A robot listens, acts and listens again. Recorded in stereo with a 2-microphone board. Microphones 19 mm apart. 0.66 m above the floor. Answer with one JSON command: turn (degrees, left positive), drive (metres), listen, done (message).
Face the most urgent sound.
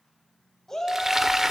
{"turn": 25}
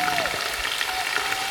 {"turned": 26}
{"listen": true}
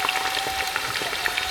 {"listen": true}
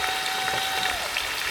{"done": "I heard a shout, but can't make it out now. It was about 5° right or 130° left."}